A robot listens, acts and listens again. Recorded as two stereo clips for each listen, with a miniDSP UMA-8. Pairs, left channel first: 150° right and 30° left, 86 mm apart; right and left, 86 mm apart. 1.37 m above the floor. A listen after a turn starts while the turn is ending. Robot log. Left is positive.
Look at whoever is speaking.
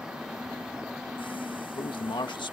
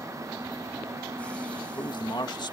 note: The man speaking: 125° right.
cmd yaw -125
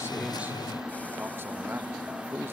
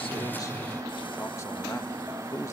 note: The man speaking is now 35° right.
cmd yaw -35
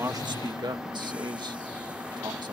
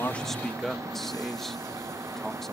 end: Found it: a man speaking, straight ahead.